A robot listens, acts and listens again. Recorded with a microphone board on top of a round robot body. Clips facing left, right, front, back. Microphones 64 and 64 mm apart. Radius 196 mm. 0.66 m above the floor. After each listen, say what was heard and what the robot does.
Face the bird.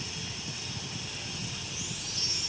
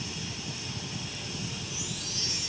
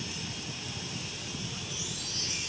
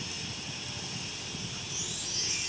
Keep listening.
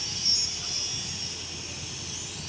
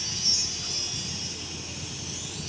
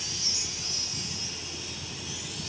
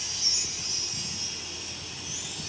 Keep listening.
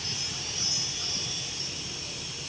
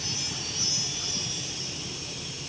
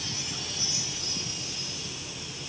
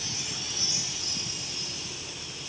I can't make out a bird, only a chime.